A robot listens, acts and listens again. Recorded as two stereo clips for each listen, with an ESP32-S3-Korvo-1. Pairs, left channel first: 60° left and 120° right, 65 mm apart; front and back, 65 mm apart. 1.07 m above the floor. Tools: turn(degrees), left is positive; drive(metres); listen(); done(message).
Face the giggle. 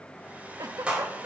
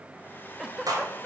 turn(degrees=-95)
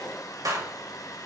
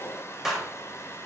listen()
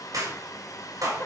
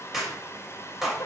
listen()
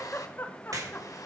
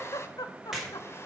done("Found it: a giggle, straight ahead.")